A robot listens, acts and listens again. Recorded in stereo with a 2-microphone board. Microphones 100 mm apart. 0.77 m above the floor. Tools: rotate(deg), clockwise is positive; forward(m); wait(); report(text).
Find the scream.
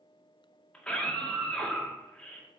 rotate(-30)
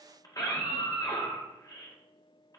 rotate(-140)
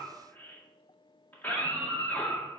rotate(-20)
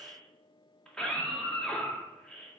rotate(-10)
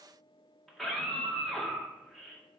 report("Facing the scream.")